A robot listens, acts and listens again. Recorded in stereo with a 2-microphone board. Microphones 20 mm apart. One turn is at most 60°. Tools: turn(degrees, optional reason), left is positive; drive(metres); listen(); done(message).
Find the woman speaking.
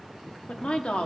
turn(degrees=60, reason="The woman speaking: about 65° left or 115° left.")
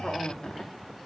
turn(degrees=45, reason="So it is at 45° left.")
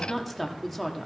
done("Facing the woman speaking, 1 to 2 m away.")